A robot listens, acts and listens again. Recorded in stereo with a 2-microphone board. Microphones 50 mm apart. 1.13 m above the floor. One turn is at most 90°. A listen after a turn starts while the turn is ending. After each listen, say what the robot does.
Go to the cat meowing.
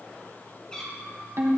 Turn 20° left.
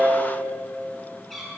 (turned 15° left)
Drive 1.0 m forward.
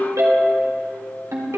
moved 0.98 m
Keep listening.
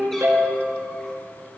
Keep listening.
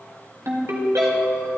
I heard a cat meowing from this way, but can't make it out now. I did not reach it.